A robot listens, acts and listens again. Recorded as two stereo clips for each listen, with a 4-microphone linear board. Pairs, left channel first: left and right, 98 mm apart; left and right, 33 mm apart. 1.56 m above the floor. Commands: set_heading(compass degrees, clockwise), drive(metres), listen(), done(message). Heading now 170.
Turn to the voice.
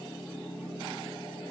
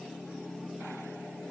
listen()
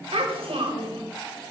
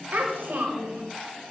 set_heading(245)
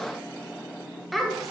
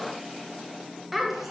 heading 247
done("Found it: a child speaking, straight ahead, 1 to 2 m away.")